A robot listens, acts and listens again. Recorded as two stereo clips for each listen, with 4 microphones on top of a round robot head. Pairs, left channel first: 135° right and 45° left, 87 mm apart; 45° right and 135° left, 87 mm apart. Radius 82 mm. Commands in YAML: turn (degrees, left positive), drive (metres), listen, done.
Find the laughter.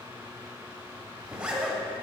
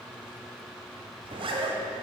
listen: true
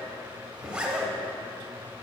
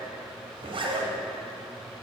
listen: true
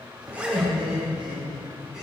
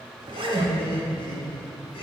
turn: -40
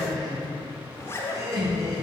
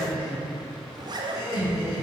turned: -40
done: "Facing the laughter."